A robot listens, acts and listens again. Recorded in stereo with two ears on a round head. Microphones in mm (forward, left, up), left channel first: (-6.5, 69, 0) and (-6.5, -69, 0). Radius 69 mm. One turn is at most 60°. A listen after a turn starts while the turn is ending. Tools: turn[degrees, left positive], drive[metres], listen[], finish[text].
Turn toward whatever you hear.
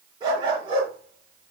Thought: The dog barking: about 35° right or 145° right.
Action: turn[-35]
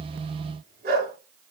Thought: So it is at 110° right.
Action: turn[-60]
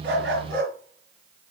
Thought: The dog barking is now 60° right.
Action: turn[-60]
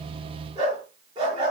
Thought: The dog barking is now 30° right.
Action: turn[-30]
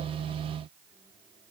Action: listen[]
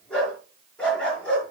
Action: finish[Found it: a dog barking, straight ahead, over 4 m away.]